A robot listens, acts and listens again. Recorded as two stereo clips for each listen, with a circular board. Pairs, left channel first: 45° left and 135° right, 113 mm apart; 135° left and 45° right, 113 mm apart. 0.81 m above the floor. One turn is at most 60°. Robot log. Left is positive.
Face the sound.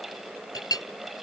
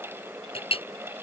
note: The clink: 100° left.
cmd yaw +60
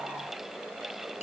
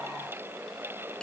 note: Nothing new. It was at 40° left.
cmd yaw +40
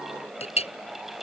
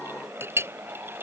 note: The clink is now 25° left.
cmd yaw +25
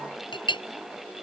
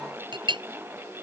end: Found it: a clink, straight ahead.